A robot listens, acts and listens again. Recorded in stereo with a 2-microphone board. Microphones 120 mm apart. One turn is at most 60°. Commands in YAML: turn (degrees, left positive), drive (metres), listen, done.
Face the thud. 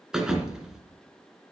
turn: -30
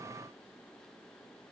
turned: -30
listen: true
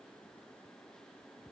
done: "I heard a thud, but can't make it out now. It was about 25° left or 145° right."